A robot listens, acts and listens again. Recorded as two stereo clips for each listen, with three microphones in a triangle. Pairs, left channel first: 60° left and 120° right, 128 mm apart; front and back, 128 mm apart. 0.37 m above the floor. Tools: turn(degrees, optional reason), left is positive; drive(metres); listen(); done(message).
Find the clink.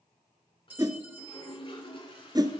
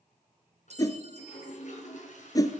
turn(degrees=165, reason="The clink: 165° left.")
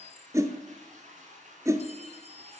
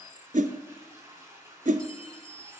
turn(degrees=40, reason="The clink is now 40° left.")
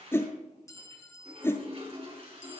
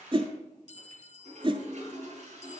done("Found it: a clink, straight ahead, 1 to 2 m away.")